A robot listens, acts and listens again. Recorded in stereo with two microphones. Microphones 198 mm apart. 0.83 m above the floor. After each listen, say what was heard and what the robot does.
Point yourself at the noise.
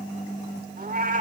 The cat meowing: about 40° right or 140° right. Turn 40° right.
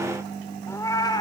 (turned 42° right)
So it is at 20° left. Turn 20° left.
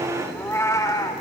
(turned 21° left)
The cat meowing is now 20° left. Turn 20° left.
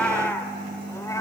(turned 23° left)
The cat meowing is now 15° left. Turn 15° left.
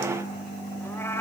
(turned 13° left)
The cat meowing is now 15° left. Turn 15° left.
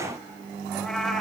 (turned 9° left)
Found it: a cat meowing, straight ahead, 2 to 4 m away.